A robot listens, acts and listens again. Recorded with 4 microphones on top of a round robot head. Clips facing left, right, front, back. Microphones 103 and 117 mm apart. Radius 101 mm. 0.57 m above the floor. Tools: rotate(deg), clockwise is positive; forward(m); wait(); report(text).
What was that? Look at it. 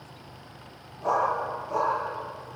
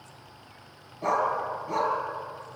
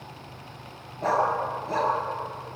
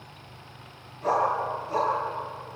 rotate(50)
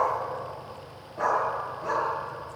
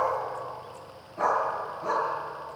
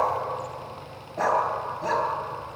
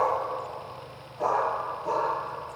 report("Found it: a dog barking, straight ahead.")